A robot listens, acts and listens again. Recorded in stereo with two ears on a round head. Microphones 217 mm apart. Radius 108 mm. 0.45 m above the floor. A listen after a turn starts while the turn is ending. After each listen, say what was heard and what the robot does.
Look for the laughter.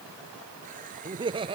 The laughter: about 20° right or 160° right. Turn 20° right.
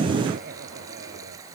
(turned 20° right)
Keep listening.
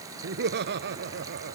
So it is at 130° right. Turn 130° right.
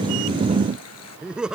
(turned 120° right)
Found it: laughter, straight ahead.